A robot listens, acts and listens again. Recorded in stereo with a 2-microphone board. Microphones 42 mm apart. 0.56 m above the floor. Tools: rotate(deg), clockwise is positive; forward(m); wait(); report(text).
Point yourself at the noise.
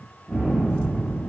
rotate(-30)
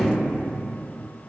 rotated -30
wait()
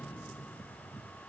report("I heard a gunshot, but can't make it out now. It was about 20° right or 140° left.")